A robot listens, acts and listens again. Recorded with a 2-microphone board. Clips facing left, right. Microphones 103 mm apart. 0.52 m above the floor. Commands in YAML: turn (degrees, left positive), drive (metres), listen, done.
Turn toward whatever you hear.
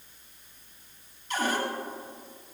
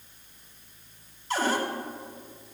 turn: -35
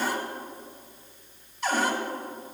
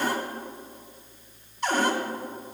done: "Found it: a cupboard door, straight ahead, 1 to 2 m away."